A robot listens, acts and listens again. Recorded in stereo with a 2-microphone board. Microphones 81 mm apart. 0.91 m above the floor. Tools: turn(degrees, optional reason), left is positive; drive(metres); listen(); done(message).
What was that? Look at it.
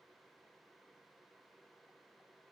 listen()
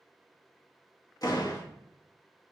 turn(degrees=50, reason="The door slam: about 50° left or 130° left.")
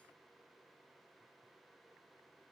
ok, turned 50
listen()
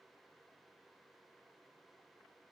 done("I heard a door slam, but can't make it out now. It was about straight ahead or 80° left.")